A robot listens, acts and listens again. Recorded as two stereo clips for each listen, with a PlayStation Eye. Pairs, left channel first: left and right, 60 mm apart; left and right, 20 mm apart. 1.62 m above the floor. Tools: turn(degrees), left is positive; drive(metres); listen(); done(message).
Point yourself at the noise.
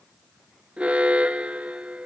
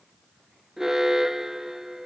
turn(degrees=-20)
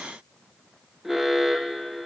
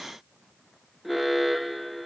done("Found it: an alarm, straight ahead.")